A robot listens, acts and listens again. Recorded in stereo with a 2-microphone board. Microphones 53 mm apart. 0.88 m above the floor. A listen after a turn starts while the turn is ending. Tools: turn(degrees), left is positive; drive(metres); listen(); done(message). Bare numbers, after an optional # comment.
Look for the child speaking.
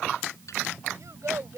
turn(-90)
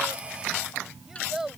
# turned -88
done("Found it: a child speaking, straight ahead.")